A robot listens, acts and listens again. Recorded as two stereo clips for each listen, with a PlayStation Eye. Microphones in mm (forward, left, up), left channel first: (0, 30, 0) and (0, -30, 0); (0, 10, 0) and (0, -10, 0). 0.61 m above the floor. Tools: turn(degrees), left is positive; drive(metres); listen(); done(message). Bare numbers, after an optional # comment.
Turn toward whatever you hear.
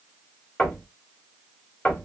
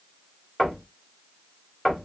# The knocking: about 20° left or 160° left.
turn(20)
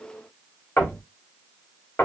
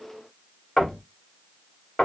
# So it is at 135° left.
turn(135)
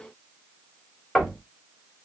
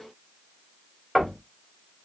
# The knocking is now 15° left.
turn(15)
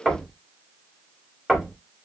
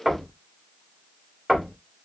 done("Found it: knocking, straight ahead, 1 to 2 m away.")